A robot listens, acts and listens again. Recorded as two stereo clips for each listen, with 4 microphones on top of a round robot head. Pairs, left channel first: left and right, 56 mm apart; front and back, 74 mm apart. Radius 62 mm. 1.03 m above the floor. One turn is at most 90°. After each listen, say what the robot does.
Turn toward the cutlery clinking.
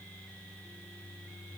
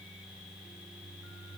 Keep listening.
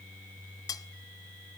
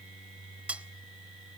Turn 90° left.
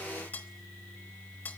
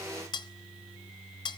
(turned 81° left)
Turn 20° left.
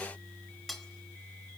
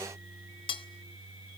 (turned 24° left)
Facing the cutlery clinking, 1 to 2 m away.